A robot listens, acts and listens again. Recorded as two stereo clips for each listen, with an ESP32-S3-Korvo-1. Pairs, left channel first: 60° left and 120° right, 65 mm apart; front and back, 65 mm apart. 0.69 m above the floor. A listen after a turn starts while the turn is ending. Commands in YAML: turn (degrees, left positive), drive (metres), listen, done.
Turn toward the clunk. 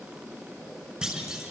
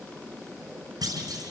turn: 160
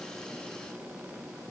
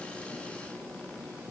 done: "I heard a clunk from this way, but can't make it out now."